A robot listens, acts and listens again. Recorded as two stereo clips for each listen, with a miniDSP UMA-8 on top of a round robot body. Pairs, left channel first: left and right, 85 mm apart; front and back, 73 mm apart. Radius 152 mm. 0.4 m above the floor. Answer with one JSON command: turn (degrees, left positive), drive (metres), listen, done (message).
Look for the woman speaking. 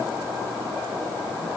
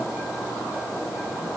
{"listen": true}
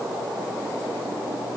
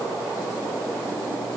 {"listen": true}
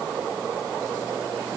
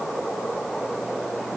{"done": "I can't make out a woman speaking to turn to."}